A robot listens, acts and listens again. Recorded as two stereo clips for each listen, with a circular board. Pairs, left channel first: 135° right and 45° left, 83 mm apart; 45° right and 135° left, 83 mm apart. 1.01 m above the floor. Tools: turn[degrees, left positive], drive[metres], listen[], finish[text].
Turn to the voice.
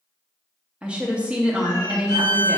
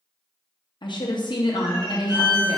Thought: The woman speaking: 30° right.
Action: turn[-30]
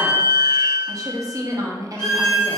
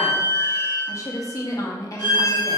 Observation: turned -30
Action: finish[Facing the woman speaking, under 1 m away.]